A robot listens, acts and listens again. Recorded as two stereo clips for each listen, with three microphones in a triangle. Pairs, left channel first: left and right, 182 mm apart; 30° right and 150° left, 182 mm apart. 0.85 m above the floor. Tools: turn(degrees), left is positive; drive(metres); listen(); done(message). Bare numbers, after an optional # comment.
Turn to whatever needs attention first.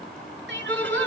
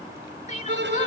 # The crying: 80° right.
turn(-80)
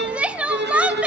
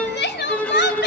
done("Found it: crying, straight ahead, 1 to 2 m away.")